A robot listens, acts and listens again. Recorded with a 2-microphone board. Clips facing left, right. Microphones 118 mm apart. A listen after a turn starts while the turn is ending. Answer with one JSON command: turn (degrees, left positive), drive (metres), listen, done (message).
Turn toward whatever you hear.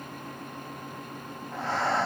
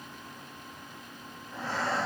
{"turn": 70}
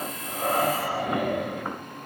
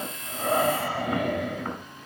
{"turn": 10}
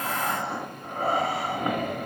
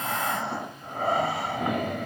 {"done": "Found it: breathing, straight ahead, 1 to 2 m away."}